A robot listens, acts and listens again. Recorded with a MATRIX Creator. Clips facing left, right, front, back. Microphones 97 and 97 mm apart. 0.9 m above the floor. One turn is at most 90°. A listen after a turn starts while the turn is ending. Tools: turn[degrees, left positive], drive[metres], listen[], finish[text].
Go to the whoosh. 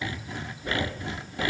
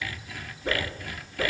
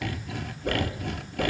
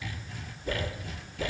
Thought: The whoosh: 30° right.
Action: turn[-30]
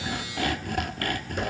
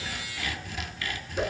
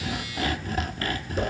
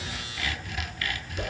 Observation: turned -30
Action: drive[1.0]
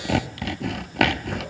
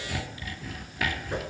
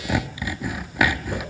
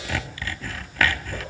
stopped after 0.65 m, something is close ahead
Action: listen[]
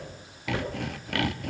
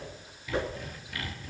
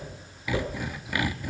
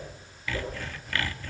Action: finish[Blocked. The whoosh is further on, straight ahead.]